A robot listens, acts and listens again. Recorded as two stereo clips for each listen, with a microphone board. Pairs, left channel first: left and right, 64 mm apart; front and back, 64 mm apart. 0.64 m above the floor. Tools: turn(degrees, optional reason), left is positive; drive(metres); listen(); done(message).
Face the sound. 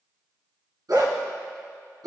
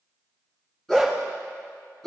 turn(degrees=-85, reason="The dog barking: 85° right.")
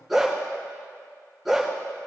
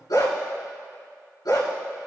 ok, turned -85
done("Found it: a dog barking, straight ahead, 2 to 4 m away.")